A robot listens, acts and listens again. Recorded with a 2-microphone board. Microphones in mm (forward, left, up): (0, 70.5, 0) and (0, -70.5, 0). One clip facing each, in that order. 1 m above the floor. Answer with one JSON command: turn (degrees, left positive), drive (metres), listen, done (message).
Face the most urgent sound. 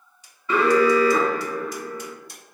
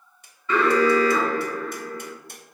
{"turn": 30}
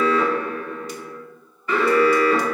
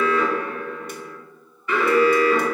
{"turn": 140}
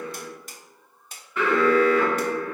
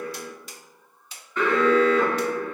{"turn": 10}
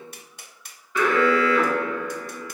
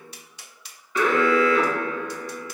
{"done": "Facing the alarm, 1 to 2 m away."}